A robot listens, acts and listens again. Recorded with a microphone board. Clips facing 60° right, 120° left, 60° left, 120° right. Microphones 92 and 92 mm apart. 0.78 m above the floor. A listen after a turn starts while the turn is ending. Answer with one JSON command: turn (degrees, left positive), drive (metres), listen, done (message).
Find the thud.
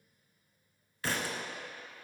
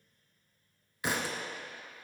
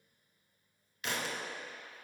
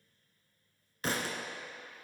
{"turn": -170}
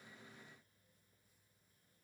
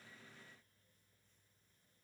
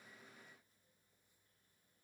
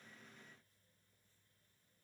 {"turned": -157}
{"turn": -10}
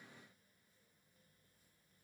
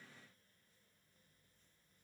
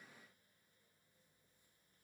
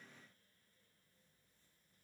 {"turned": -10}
{"done": "Facing where the thud came from. I can't hear it now."}